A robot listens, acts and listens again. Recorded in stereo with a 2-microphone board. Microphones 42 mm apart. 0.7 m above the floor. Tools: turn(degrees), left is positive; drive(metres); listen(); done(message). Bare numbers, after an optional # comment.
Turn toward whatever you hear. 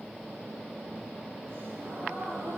# The gasp: about 70° right or 110° right.
turn(-70)
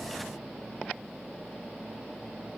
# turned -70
listen()
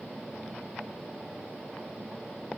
done("I heard a gasp, but can't make it out now. It was about straight ahead or 40° right.")